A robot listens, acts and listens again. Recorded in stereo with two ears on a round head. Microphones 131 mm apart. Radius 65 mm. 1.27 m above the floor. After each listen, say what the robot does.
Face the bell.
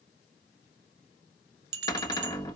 Turn 90° right.
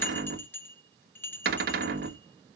Turn 15° left.
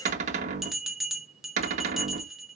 Found it: a bell, straight ahead, 1 to 2 m away.